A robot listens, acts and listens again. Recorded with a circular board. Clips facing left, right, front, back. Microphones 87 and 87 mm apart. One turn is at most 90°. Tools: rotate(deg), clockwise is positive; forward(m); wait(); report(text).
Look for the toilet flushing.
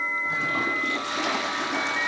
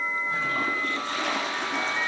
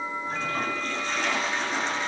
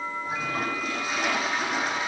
rotate(-90)
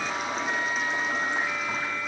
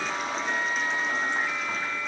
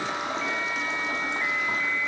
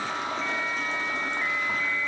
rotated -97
wait()
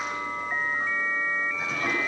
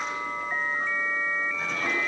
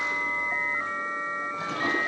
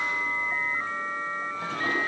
report("Facing the toilet flushing, over 4 m away.")